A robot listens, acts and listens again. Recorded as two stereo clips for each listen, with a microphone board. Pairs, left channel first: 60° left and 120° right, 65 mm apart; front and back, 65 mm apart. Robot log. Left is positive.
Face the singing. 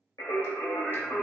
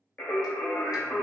note: The singing: 55° left.
cmd yaw +55
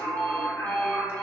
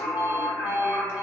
end: Found it: singing, straight ahead.